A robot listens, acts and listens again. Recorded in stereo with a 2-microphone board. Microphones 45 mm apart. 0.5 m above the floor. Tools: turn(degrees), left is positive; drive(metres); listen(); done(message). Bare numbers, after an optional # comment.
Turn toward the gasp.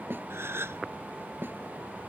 # The gasp: about 65° right or 115° right.
turn(-65)
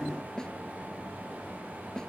listen()
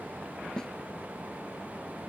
done("I heard a gasp, but can't make it out now. It was about straight ahead or 50° right.")